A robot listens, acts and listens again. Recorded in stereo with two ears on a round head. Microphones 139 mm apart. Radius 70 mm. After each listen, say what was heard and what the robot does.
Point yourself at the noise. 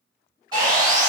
The sawing: about 25° right or 155° right. Turn 25° right.
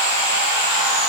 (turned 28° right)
Facing the sawing.